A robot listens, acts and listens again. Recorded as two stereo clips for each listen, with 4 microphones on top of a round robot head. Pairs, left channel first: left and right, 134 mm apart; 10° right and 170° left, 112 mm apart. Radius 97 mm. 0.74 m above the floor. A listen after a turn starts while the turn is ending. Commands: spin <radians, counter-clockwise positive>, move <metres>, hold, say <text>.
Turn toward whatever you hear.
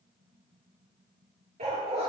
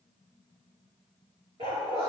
spin -2.36
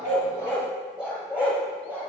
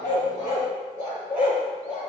spin -0.17
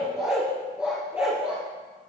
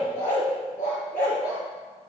spin -0.17
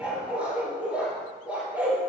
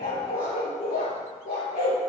spin -0.17
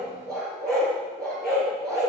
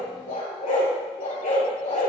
say Found it: a dog barking, straight ahead, over 4 m away.